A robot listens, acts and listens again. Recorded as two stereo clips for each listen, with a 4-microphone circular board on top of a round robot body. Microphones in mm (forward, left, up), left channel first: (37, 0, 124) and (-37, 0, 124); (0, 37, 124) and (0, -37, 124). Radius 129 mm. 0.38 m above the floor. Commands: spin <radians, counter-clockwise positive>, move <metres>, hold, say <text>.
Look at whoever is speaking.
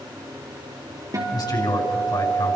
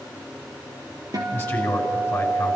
spin 0.44
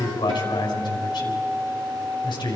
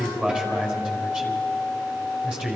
spin -0.26
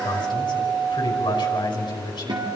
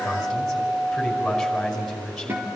say Found it: a man speaking, straight ahead, over 4 m away.